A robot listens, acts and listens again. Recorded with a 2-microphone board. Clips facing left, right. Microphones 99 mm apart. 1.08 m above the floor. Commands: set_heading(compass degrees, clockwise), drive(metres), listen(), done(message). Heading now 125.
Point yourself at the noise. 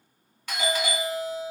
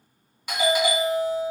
set_heading(140)
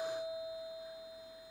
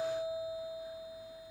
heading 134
set_heading(164)
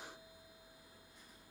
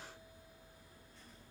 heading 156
listen()
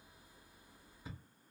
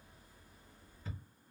set_heading(141)
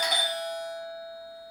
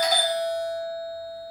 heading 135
done("Found it: a doorbell, straight ahead.")